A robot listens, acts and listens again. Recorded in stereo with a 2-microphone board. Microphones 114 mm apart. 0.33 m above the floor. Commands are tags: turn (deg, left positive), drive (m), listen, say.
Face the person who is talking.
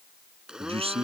<turn deg="-60"/>
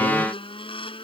<listen/>
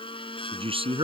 <turn deg="-55"/>
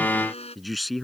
<say>Found it: a man speaking, straight ahead.</say>